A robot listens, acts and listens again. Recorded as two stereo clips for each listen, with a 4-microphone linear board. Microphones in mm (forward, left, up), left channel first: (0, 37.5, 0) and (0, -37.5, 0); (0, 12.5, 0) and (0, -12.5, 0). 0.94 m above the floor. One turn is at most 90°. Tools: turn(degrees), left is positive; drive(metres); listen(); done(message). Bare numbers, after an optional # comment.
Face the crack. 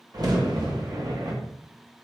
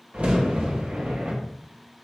# The crack: about 55° right or 125° right.
turn(-55)
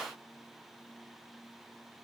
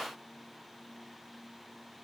listen()
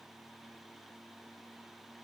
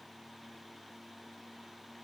done("I heard a crack, but can't make it out now. It was about straight ahead or 70° right.")